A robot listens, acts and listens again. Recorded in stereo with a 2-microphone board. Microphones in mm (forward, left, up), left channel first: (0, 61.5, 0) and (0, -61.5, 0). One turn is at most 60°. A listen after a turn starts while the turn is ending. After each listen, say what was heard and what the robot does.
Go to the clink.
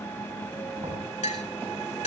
The clink: about 75° left or 105° left. Turn 60° left.
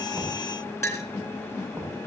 So it is at 25° left. Turn 25° left.
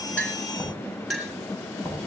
Drive 1.0 m forward.
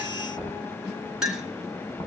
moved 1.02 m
Drive 1.0 m forward.
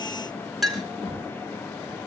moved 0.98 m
Drive 1.0 m forward.
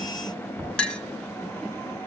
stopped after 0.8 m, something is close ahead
The clink is now 10° left. Turn 10° left.
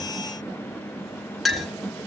I am next to the clink.